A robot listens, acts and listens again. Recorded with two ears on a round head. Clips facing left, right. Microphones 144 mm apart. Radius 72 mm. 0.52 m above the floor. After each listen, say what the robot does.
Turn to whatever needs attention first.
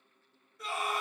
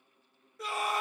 Turn 60° right.
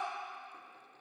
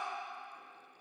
Keep listening.
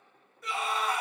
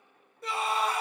Turn 35° right.
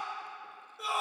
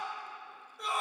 Facing the scream.